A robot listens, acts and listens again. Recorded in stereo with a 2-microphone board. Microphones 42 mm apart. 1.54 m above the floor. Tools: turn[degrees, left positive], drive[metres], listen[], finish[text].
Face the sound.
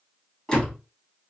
Thought: The door slam: about 20° left or 160° left.
Action: turn[20]
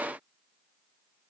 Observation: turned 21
Action: listen[]
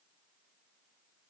Action: finish[I heard a door slam, but can't make it out now. It was about straight ahead or 140° left.]